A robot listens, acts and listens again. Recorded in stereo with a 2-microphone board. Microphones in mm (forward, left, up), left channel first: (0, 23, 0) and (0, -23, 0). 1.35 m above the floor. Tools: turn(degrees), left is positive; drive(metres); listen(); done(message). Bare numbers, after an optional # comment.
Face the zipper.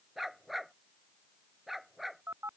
listen()
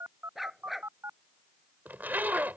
# The zipper: about 45° right or 135° right.
turn(-45)
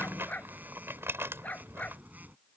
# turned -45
# So it is at 85° right.
turn(-85)
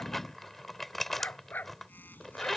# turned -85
done("Found it: a zipper, straight ahead.")